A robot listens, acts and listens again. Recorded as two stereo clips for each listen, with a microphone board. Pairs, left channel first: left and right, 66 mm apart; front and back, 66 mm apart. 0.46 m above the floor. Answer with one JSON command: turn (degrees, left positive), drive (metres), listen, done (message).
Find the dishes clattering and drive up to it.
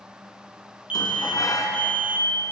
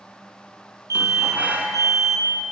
{"turn": 110}
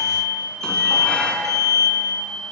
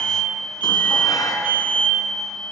{"turn": 15}
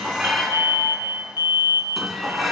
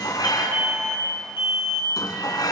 {"drive": 1.0}
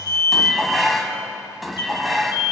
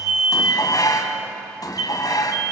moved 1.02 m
{"drive": 1.0}
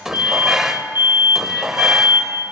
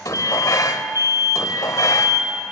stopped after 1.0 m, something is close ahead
{"turn": -10}
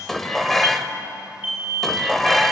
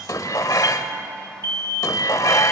{"done": "I am next to the dishes clattering."}